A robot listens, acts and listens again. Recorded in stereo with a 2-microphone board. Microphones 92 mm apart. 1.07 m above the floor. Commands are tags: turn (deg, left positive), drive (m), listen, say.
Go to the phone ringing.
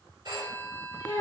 <turn deg="-50"/>
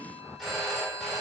<drive m="1.0"/>
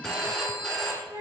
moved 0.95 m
<drive m="1.0"/>
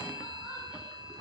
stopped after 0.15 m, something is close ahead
<say>Arrived at the phone ringing, straight ahead.</say>